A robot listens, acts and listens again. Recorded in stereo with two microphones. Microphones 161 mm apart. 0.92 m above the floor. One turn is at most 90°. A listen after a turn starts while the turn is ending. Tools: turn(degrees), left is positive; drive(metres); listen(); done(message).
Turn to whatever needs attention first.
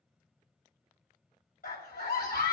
turn(degrees=90)
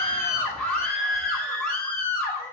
done("Facing the scream.")